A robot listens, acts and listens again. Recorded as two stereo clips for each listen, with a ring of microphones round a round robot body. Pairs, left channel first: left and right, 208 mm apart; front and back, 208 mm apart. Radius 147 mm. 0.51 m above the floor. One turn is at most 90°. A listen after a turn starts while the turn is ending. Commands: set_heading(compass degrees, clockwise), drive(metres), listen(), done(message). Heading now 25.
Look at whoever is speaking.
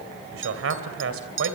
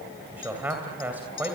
set_heading(115)
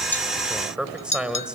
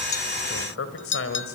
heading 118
done("Found it: a man speaking, straight ahead, 2 to 4 m away.")